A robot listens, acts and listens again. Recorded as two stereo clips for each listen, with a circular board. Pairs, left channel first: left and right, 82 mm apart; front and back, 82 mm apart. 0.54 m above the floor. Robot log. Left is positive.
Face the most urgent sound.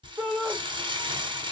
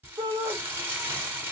note: The shout: 165° right.
cmd yaw -165
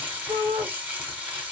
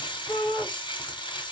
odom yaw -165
note: The shout is now 65° right.
cmd yaw -65
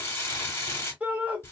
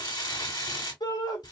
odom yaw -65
note: The shout is now 20° right.
cmd yaw -20
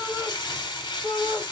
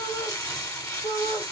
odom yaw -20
end: Facing the shout, 1 to 2 m away.